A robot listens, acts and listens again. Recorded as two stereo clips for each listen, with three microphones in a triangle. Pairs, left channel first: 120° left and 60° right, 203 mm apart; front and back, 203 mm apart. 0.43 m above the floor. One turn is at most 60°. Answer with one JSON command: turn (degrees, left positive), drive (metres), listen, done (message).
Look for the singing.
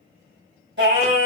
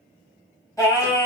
{"turn": -60}
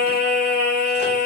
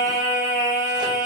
{"turn": -30}
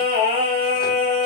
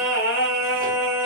{"done": "Facing the singing, 1 to 2 m away."}